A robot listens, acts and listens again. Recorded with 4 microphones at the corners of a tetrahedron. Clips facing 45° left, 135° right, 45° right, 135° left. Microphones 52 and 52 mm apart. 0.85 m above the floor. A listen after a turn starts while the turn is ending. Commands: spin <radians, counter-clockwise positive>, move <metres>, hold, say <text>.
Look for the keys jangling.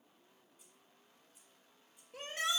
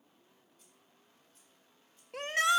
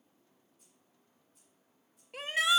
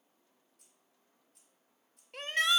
spin 2.09
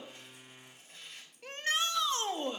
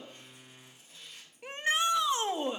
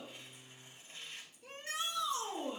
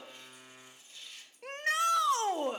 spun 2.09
hold
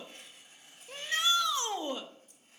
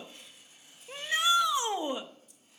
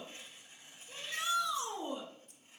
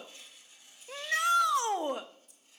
say Found it: keys jangling, straight ahead.